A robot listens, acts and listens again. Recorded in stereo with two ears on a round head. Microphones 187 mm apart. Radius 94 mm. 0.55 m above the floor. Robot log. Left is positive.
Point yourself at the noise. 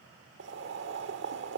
note: The boiling: about 60° right or 120° right.
cmd yaw -60
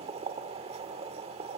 note: So it is at 35° right.
cmd yaw -35
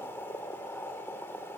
note: The boiling is now 15° left.
cmd yaw +15
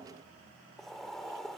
end: Found it: boiling, straight ahead, 1 to 2 m away.